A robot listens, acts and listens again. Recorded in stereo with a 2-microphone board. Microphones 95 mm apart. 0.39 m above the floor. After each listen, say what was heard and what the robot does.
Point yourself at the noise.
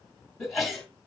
Turn 30° left.
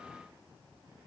Keep listening.
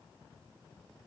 I heard a sneeze, but can't make it out now. It was about 30° right or 150° left.